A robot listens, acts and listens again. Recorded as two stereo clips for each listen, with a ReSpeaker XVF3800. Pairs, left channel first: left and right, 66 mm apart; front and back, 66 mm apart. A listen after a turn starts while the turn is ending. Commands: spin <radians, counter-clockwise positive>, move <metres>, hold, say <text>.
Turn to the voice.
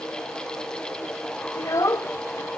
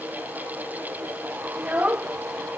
spin 2.01
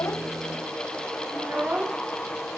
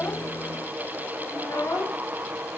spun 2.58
spin -0.61
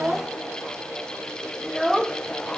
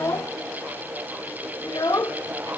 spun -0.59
say Facing the child speaking, under 1 m away.